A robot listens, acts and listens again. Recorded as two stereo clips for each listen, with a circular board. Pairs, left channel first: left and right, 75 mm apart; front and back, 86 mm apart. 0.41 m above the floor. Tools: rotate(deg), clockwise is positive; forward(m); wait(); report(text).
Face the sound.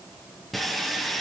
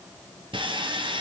rotate(-180)
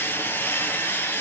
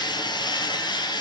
rotate(-30)
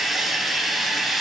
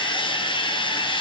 report("Facing the sawing.")